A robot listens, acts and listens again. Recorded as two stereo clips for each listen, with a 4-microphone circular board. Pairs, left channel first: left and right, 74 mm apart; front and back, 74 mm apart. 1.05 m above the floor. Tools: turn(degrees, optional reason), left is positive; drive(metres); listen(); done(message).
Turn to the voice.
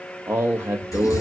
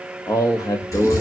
turn(degrees=-35, reason="The man speaking: 35° right.")
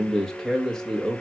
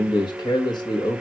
done("Facing the man speaking, 1 to 2 m away.")